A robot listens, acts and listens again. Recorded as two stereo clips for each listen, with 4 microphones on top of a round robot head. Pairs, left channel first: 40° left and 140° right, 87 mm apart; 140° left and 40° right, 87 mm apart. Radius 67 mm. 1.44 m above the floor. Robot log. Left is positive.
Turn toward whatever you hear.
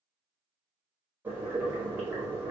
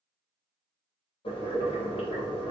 note: The boiling: 150° left.
cmd yaw +150
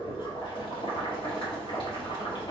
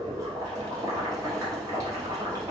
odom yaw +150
note: The boiling is now 10° left.
cmd yaw +10
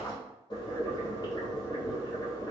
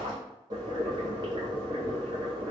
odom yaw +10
end: Facing the boiling.